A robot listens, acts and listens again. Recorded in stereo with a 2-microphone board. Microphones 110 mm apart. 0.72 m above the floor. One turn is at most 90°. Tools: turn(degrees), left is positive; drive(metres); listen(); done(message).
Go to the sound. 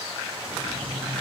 turn(degrees=65)
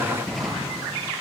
drive(metres=1.0)
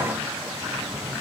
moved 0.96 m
drive(metres=1.0)
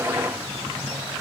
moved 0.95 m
drive(metres=1.0)
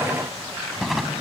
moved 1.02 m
drive(metres=1.0)
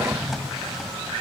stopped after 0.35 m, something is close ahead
done("I am next to the drawer.")